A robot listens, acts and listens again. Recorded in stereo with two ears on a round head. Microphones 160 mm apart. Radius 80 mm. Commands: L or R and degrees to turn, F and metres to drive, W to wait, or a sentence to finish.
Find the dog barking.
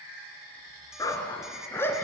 L30
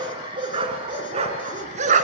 R45
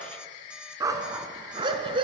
R30
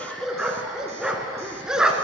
Facing the dog barking.